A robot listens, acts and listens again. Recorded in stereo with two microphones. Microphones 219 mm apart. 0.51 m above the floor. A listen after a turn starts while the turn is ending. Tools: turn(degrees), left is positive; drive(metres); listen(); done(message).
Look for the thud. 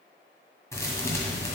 turn(degrees=30)
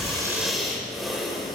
listen()
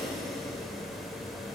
done("I heard a thud, but can't make it out now. It was about 15° right or 135° left.")